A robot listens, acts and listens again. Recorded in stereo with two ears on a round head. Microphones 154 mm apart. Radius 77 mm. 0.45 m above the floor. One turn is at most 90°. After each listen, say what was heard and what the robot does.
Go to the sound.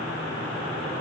Keep listening.
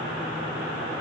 Keep listening.
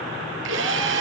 Turn 90° right.
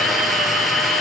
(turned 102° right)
Drive 1.0 m forward.
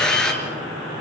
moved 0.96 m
Drive 1.0 m forward.
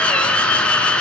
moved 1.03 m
Drive 1.0 m forward.
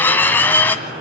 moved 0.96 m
The drill is now 10° left. Turn 10° left.
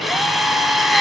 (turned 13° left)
Drive 1.0 m forward.
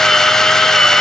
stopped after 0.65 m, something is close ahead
I am next to the drill.